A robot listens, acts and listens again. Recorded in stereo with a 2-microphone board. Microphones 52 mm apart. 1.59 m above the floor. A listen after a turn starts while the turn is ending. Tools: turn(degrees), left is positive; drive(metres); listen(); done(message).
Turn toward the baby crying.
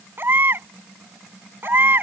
turn(degrees=-45)
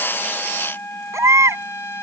turn(degrees=-90)
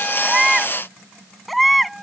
done("Facing the baby crying.")